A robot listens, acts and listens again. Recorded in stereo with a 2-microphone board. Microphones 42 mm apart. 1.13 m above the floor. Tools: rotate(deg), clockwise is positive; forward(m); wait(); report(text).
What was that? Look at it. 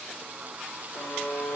rotate(-55)
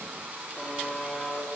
report("Facing the buzzer, 2 to 4 m away.")